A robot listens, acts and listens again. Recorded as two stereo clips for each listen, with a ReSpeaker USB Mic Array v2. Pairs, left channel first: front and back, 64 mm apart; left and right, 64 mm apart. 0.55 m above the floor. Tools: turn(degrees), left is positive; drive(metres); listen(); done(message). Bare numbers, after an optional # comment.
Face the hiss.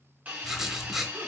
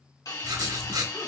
# The hiss: 115° left.
turn(115)
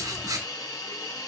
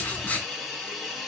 done("Facing the hiss, 1 to 2 m away.")